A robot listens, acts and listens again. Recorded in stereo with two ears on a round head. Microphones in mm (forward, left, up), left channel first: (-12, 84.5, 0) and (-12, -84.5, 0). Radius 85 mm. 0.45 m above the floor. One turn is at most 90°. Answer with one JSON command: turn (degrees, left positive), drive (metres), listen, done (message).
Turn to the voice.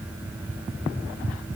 {"listen": true}
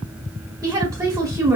{"turn": -20}
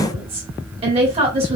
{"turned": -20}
{"turn": -90}
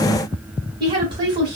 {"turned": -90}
{"turn": -30}
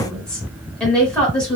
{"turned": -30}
{"done": "Facing the woman speaking, 1 to 2 m away."}